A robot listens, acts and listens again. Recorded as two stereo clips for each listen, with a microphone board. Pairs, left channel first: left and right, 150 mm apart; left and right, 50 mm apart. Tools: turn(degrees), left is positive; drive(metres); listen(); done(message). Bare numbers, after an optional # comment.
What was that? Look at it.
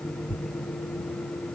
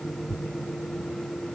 # The tearing paper: about 15° left or 165° left.
turn(15)
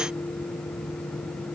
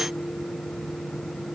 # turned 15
listen()
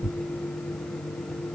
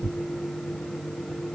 done("Facing the tearing paper.")